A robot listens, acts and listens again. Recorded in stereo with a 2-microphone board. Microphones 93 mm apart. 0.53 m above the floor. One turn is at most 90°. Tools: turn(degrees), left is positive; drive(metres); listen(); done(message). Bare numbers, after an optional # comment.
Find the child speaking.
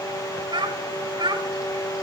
# The child speaking: about 55° right or 125° right.
turn(-55)
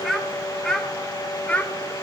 # So it is at 15° left.
turn(15)
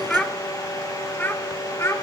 # The child speaking is now 30° left.
turn(30)
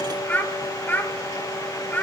# The child speaking is now 20° left.
turn(20)
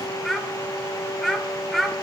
done("Facing the child speaking, 1 to 2 m away.")